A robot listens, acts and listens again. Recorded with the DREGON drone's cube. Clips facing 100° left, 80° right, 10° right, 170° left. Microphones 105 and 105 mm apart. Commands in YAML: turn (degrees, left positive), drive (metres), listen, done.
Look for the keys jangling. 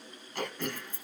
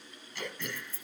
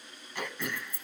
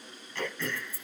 turn: 25
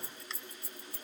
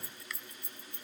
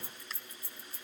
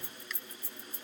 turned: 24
turn: 20
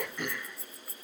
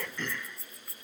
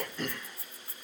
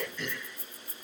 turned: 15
turn: 15
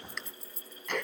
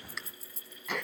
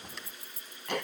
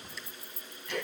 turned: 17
turn: 10
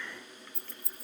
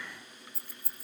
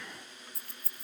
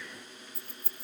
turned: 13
turn: 10
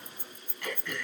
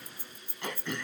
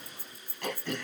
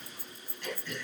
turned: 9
done: "Found it: keys jangling, straight ahead."